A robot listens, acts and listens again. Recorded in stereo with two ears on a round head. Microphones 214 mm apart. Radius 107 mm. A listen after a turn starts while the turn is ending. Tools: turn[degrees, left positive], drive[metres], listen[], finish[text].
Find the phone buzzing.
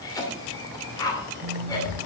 Thought: The phone buzzing: about 55° right or 125° right.
Action: turn[-55]
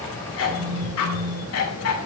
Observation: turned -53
Action: finish[Found it: a phone buzzing, straight ahead, under 1 m away.]